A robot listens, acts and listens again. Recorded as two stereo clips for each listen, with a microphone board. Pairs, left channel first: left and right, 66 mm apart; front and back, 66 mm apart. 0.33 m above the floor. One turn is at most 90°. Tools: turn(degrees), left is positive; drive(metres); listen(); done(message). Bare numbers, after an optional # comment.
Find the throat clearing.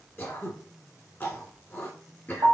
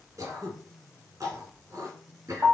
# The throat clearing: 150° left.
turn(90)
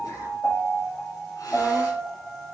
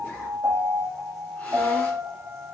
# Nothing new. It was at 60° left.
turn(60)
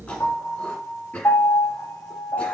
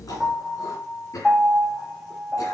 # The throat clearing is now 20° left.
turn(20)
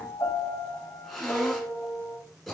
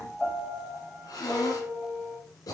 done("Facing the throat clearing.")